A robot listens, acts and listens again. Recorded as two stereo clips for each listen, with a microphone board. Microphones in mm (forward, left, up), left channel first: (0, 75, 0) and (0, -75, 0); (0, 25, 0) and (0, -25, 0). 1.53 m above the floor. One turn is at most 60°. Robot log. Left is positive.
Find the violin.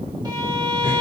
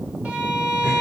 note: The violin: about 30° right or 150° right.
cmd yaw -30
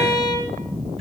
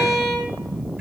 end: Facing the violin.